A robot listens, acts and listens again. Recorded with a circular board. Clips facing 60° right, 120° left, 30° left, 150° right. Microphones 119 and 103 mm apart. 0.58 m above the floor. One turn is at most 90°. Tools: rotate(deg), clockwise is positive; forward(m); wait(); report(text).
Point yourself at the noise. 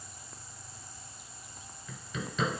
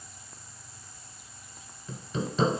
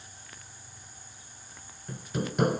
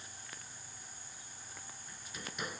rotate(-60)
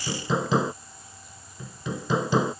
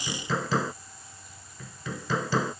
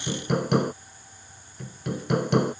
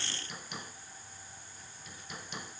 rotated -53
rotate(-10)
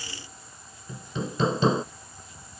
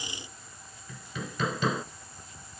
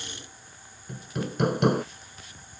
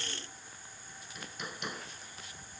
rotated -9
report("Found it: hammering, straight ahead.")